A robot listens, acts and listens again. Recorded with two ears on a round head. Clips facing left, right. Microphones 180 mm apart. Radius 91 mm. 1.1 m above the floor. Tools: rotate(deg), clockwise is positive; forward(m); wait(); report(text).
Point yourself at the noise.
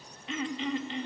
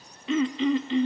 rotate(65)
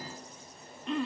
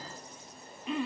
report("Facing the throat clearing.")